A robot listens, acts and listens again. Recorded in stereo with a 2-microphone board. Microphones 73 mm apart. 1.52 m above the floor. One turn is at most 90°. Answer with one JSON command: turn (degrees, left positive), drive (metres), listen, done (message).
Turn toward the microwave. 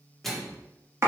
{"turn": 30}
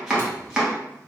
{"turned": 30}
{"listen": true}
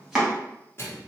{"turn": 90}
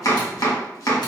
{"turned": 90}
{"turn": 55}
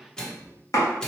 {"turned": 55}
{"turn": 10}
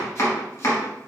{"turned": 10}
{"listen": true}
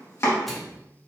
{"done": "Facing the microwave, 1 to 2 m away."}